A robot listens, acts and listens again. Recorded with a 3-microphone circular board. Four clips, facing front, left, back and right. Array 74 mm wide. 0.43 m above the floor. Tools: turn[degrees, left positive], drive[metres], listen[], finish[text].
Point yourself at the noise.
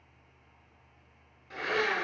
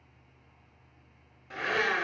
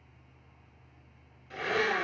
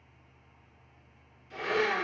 Thought: The blender: 70° left.
Action: turn[70]
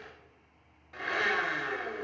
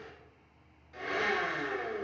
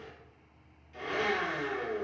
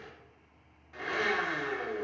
Thought: The blender is now 15° right.
Action: turn[-15]
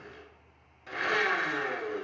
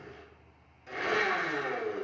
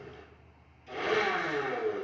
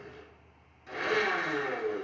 Action: finish[Facing the blender, 1 to 2 m away.]